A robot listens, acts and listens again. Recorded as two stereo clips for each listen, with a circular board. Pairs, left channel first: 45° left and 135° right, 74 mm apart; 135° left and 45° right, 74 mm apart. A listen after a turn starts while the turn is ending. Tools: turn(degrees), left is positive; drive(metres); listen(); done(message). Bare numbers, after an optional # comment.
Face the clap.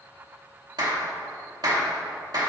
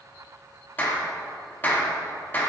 # The clap: 160° right.
turn(-160)
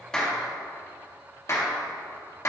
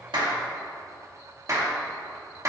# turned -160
done("Found it: a clap, straight ahead.")